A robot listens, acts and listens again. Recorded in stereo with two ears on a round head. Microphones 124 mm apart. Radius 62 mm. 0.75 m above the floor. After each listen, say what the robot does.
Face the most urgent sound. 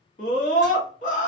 Turn 60° left.
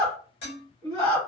Turn 30° left.
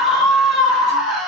Found it: a scream, straight ahead.